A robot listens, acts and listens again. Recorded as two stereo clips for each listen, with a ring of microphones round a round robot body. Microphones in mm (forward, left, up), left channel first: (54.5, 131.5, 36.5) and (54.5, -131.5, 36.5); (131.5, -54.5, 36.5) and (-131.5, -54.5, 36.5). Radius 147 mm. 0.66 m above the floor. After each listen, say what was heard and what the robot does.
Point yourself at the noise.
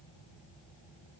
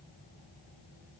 Keep listening.
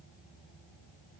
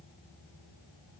Keep listening.
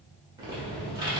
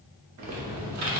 The typing on a keyboard: 165° right. Turn 165° right.
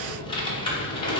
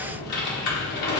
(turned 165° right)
The typing on a keyboard is now 20° left. Turn 20° left.
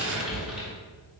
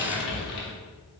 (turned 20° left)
Facing the typing on a keyboard, 1 to 2 m away.